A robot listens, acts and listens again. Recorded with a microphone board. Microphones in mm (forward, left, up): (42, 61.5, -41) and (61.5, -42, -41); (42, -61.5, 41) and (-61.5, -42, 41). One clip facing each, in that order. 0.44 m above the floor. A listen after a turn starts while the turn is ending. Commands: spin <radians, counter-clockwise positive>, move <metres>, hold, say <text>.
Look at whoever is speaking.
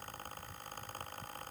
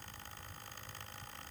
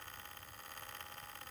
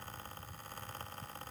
hold
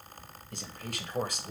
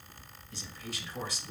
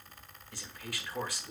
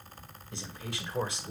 spin 1.92
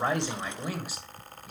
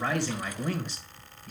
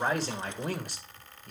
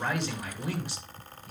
spin 0.35
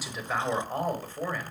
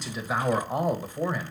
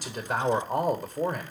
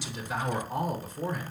say Found it: a man speaking, straight ahead, 1 to 2 m away.